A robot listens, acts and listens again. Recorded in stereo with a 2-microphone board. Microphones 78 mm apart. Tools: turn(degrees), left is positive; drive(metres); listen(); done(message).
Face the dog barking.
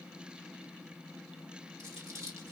listen()
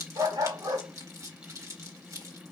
turn(degrees=-70)
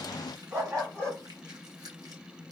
turn(degrees=-35)
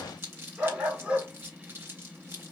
turn(degrees=-15)
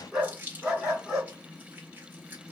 done("Found it: a dog barking, straight ahead, over 4 m away.")